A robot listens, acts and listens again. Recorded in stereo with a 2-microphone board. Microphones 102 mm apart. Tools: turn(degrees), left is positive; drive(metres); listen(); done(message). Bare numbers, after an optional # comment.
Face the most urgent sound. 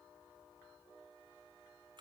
listen()
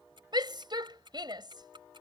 # The shout: about 45° right or 135° right.
turn(-45)
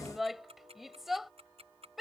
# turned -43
done("Facing the shout.")